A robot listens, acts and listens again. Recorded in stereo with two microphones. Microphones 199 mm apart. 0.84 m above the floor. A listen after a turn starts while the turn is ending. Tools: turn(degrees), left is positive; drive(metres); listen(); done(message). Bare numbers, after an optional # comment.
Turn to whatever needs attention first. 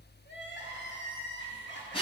# The crying: about 65° left or 115° left.
turn(65)
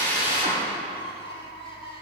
# So it is at 30° left.
turn(30)
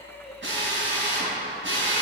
done("Facing the crying.")